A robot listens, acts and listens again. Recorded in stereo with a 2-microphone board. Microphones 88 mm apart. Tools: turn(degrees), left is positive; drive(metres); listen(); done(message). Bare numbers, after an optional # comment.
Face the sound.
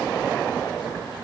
listen()
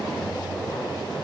listen()
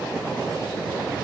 done("I can't make out anything.")